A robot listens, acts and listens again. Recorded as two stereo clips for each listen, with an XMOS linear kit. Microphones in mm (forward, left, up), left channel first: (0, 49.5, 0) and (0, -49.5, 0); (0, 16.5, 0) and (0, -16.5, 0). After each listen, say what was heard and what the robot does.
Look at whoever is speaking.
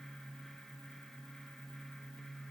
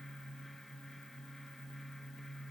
Keep listening.
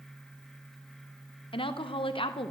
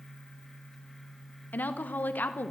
The woman speaking: about 70° left or 110° left. Turn 70° left.
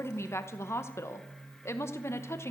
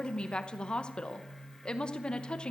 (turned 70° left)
So it is at 30° left. Turn 30° left.
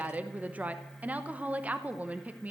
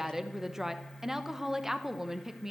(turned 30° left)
The woman speaking is now 20° right. Turn 20° right.
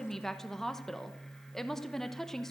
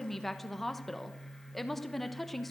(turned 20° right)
Found it: a woman speaking, straight ahead, under 1 m away.